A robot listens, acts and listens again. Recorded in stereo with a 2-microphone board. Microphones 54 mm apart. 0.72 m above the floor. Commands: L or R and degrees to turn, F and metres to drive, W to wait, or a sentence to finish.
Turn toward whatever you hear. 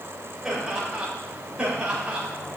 R20
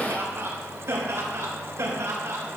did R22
R120
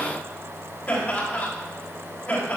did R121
L20
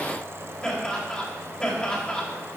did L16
Found it: laughter, straight ahead, over 4 m away.